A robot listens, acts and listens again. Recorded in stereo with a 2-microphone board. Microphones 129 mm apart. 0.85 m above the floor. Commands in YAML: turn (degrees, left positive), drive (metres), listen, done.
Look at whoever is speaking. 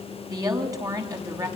turn: -25
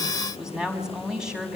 done: "Facing the woman speaking."